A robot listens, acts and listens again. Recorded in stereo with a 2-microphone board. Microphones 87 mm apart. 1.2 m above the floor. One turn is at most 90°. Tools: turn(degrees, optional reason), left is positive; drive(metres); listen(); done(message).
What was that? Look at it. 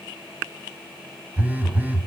turn(degrees=-20, reason="The phone buzzing: about 20° right or 160° right.")
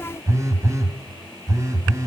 turn(degrees=-90, reason="So it is at 135° right.")
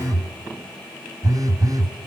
turn(degrees=-50, reason="The phone buzzing is now 50° right.")
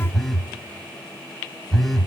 done("Found it: a phone buzzing, straight ahead, 1 to 2 m away.")